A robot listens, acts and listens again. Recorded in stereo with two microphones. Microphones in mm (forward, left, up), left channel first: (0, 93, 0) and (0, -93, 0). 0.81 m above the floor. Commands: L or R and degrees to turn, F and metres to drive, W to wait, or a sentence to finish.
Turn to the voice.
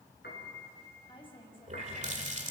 L30
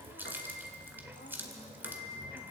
W
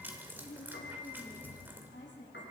L95
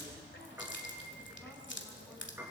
W
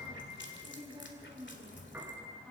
Found it: a woman speaking, straight ahead, over 4 m away.